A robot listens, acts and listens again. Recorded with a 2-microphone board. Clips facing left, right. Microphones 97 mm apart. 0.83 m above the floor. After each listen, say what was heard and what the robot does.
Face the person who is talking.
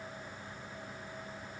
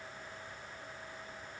Keep listening.
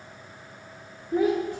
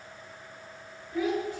The child speaking: about 45° left or 135° left. Turn 45° left.
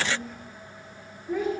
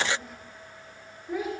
Facing the child speaking.